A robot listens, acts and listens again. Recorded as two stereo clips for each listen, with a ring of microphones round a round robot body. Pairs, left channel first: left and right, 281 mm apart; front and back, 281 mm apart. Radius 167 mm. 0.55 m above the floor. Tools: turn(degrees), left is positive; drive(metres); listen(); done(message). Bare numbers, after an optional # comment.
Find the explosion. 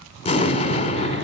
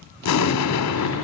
# The explosion: 20° left.
turn(20)
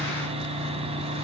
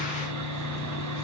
done("I heard an explosion from this way, but can't make it out now.")